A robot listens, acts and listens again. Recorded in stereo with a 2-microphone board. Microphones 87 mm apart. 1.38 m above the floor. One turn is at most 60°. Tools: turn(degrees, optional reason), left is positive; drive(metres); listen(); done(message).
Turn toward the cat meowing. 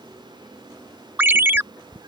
turn(degrees=-60, reason="The cat meowing: about 60° right or 120° right.")
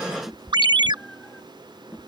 done("Facing the cat meowing.")